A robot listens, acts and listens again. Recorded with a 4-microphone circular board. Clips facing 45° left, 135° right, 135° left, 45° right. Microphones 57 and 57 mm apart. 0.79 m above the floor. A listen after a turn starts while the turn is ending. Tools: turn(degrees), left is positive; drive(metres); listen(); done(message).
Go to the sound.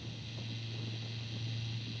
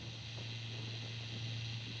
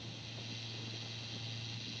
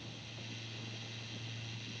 listen()
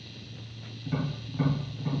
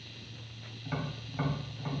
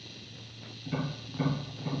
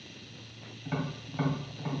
turn(degrees=-90)
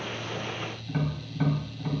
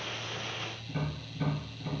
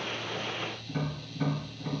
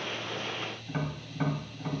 drive(metres=1.0)
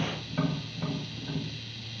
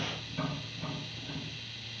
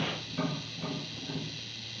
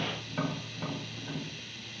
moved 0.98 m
turn(degrees=-10)
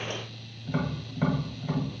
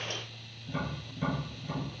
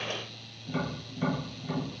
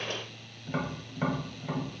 drive(metres=1.0)
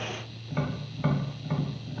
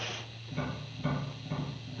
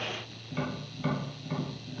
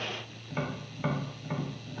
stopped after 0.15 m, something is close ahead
done("I am next to the tapping.")